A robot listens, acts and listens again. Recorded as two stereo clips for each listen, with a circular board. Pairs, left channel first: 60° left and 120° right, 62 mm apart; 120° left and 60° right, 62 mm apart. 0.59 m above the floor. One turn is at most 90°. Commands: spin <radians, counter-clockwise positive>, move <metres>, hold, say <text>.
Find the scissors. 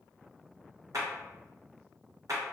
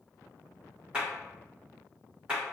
hold
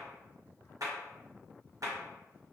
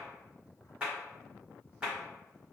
hold
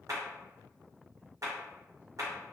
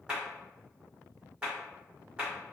say I can't make out scissors, only a clap.